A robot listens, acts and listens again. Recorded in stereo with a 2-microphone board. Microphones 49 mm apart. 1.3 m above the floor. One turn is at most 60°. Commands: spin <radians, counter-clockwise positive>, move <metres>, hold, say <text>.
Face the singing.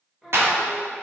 spin -0.52
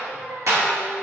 spin -1.05
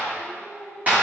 spin -0.52
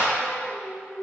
spin 0.17
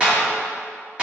hold
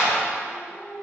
spin 0.17
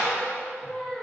say Found it: singing, straight ahead.